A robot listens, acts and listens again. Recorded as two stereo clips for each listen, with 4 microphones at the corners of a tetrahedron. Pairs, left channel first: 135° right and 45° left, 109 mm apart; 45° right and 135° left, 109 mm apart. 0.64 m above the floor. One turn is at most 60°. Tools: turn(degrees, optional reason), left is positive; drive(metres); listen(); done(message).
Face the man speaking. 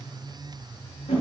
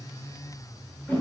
listen()
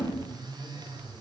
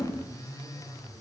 listen()
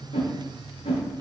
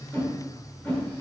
done("I can't make out a man speaking, only a whoosh.")